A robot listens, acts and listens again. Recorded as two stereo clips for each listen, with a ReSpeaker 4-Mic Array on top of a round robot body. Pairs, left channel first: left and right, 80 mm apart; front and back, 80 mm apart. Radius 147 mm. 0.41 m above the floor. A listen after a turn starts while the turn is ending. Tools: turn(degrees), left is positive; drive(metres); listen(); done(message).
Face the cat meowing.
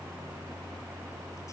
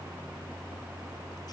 listen()
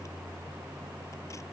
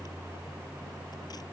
listen()
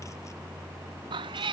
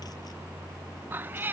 turn(degrees=-115)
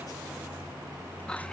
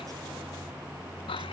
listen()
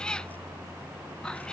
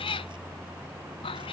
turn(degrees=10)
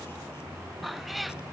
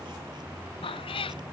done("Found it: a cat meowing, straight ahead.")